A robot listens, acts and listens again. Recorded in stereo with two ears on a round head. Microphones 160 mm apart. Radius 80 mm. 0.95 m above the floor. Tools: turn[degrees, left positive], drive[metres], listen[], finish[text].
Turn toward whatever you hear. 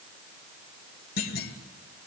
Thought: The clunk: about 60° left or 120° left.
Action: turn[60]
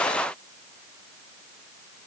Action: listen[]
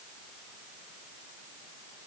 Action: finish[I heard a clunk, but can't make it out now. It was about straight ahead or 60° left.]